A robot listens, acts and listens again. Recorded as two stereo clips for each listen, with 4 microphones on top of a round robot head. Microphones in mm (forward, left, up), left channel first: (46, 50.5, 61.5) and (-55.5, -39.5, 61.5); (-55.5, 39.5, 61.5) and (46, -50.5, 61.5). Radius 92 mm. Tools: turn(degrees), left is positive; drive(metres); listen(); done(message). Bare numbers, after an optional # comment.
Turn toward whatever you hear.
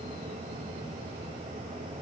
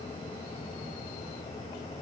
listen()
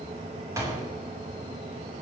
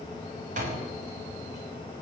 # The door slam: 70° right.
turn(-70)
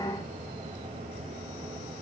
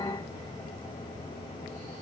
done("Facing where the door slam came from. I can't hear it now.")